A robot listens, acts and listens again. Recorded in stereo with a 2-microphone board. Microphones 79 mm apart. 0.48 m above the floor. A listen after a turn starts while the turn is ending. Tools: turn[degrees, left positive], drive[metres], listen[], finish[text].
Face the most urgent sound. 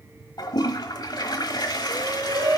Thought: The shout: about 55° right or 125° right.
Action: turn[-55]
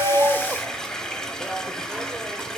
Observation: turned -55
Action: listen[]
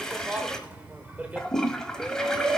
Thought: So it is at 25° right.
Action: turn[-25]
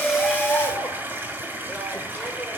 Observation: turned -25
Thought: The shout is now 10° left.
Action: turn[10]
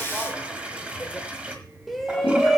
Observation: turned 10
Action: finish[Found it: a shout, straight ahead.]